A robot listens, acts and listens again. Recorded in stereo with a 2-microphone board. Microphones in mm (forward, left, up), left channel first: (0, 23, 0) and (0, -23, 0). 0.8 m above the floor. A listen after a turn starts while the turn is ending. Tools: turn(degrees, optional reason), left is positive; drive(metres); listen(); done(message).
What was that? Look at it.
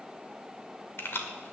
turn(degrees=55, reason="The keys jangling: about 55° left or 125° left.")
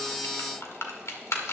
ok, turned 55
turn(degrees=85, reason="So it is at 85° left.")
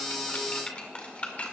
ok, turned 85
turn(degrees=30, reason="The keys jangling is now 30° left.")
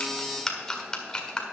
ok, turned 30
turn(degrees=20, reason="The keys jangling is now 20° left.")
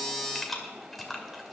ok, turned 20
done("Facing the keys jangling, 1 to 2 m away.")